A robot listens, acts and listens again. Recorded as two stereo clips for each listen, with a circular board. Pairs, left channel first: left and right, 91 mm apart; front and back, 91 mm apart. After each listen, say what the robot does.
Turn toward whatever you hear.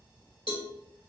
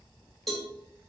Turn 90° left.
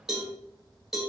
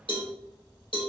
Found it: a cowbell, straight ahead, 2 to 4 m away.